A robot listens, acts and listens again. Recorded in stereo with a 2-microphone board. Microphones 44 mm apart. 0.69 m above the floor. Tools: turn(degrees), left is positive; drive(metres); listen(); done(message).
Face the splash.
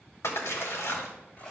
turn(degrees=90)
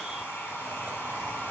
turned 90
done("Facing where the splash came from. I can't hear it now.")